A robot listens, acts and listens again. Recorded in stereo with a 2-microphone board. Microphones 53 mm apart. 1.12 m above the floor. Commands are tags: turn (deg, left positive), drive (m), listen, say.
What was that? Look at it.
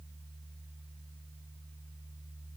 <listen/>
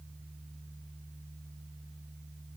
<listen/>
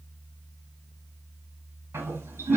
<turn deg="-65"/>
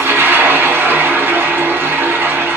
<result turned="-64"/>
<turn deg="-45"/>
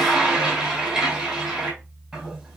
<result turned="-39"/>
<say>Facing the toilet flushing, 2 to 4 m away.</say>